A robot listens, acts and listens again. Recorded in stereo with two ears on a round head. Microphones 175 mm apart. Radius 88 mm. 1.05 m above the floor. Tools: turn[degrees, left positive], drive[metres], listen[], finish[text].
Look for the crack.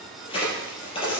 Thought: The crack: about 25° left or 155° left.
Action: turn[25]
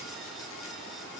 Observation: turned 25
Action: listen[]
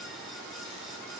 Action: finish[I heard a crack, but can't make it out now. It was about straight ahead or 130° left.]